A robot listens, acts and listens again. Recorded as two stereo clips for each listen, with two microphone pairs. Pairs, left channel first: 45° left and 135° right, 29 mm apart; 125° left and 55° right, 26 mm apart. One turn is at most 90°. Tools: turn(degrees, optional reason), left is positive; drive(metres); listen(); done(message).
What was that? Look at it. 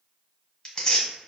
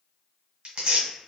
turn(degrees=-15, reason="The tearing paper: 15° right.")
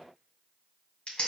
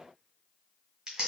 done("Found it: tearing paper, straight ahead, 1 to 2 m away.")